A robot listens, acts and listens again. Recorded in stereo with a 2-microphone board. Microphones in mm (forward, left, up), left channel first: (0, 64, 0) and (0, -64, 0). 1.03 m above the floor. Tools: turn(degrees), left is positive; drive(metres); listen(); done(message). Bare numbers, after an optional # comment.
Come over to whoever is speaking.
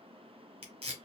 listen()
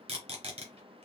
listen()
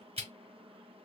done("I can't make out anyone speaking to turn to.")